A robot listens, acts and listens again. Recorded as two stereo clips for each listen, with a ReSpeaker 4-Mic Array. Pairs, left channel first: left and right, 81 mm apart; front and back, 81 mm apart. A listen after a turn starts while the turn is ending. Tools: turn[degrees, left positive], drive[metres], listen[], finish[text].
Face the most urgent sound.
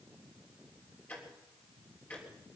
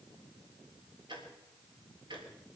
Action: listen[]
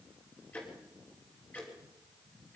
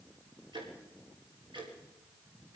Action: listen[]
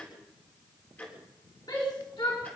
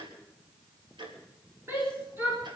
Thought: The shout: 120° left.
Action: turn[120]
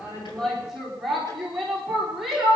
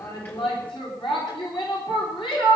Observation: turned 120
Action: finish[Facing the shout.]